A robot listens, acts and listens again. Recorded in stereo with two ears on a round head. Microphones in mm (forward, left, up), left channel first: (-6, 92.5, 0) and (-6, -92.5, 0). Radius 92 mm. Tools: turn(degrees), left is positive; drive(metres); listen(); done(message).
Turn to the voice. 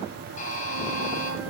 listen()
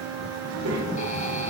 turn(degrees=-90)
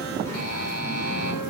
turn(degrees=15)
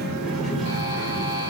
done("Found it: a child speaking, straight ahead, 2 to 4 m away.")